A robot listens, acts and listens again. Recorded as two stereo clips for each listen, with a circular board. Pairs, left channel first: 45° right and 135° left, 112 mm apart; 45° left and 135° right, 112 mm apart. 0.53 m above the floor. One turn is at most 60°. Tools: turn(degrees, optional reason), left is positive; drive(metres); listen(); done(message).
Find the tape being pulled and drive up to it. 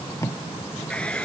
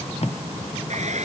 turn(degrees=20, reason="The tape being pulled: 20° left.")
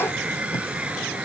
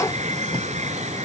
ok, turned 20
listen()
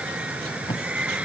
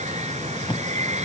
drive(metres=1.0)
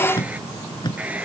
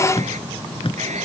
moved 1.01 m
drive(metres=1.0)
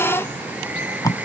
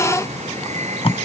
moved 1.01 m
turn(degrees=15, reason="The tape being pulled is now 15° left.")
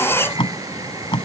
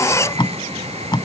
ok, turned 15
drive(metres=1.0)
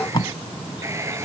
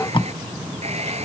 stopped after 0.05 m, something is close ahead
done("I am next to the tape being pulled.")